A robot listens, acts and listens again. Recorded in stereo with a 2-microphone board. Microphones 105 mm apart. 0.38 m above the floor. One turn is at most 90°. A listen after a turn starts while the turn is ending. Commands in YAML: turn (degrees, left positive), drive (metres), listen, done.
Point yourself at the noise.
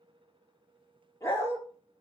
turn: 25
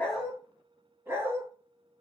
turn: -25
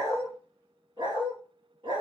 turn: -55
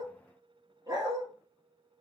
turn: -35
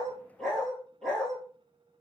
done: "Facing the dog barking, 1 to 2 m away."